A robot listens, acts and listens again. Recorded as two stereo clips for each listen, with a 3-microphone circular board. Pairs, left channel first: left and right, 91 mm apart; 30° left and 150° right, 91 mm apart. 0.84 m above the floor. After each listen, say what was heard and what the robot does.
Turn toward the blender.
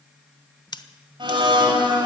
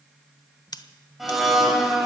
The blender: 60° right. Turn 60° right.
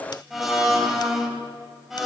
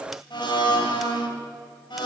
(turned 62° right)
Found it: a blender, straight ahead, 2 to 4 m away.